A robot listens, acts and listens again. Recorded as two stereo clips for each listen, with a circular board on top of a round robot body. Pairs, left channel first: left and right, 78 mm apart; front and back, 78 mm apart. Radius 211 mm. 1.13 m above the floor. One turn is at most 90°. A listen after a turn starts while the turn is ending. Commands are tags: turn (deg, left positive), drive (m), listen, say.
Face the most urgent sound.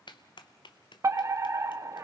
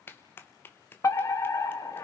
<turn deg="-45"/>
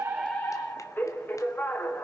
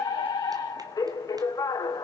<turn deg="30"/>
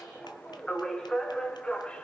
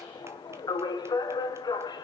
<turn deg="10"/>
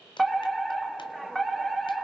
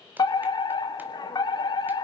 <say>Found it: a fire alarm, straight ahead, 1 to 2 m away.</say>